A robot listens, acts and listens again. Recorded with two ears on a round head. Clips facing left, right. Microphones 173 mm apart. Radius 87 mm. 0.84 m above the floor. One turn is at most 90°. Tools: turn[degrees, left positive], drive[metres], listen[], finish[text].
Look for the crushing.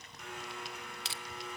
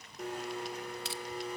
Thought: The crushing: about 60° left or 120° left.
Action: turn[60]
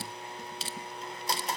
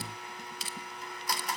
Thought: So it is at 30° left.
Action: turn[30]
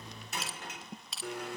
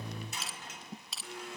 Action: finish[Facing the crushing.]